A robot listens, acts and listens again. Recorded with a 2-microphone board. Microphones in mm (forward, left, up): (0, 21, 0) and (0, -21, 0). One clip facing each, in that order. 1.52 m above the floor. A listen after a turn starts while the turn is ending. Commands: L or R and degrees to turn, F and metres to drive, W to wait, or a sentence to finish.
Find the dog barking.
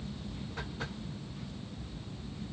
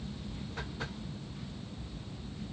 W
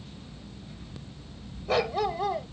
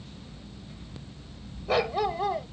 R30
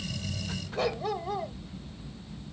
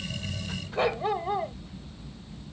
R145
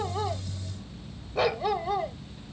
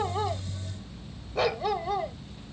Facing the dog barking.